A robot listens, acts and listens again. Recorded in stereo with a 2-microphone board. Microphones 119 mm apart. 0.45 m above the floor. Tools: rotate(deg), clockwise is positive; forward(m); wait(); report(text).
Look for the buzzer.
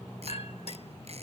wait()
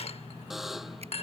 rotate(30)
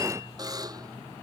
rotate(145)
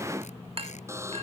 rotate(25)
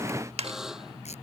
report("Found it: a buzzer, straight ahead.")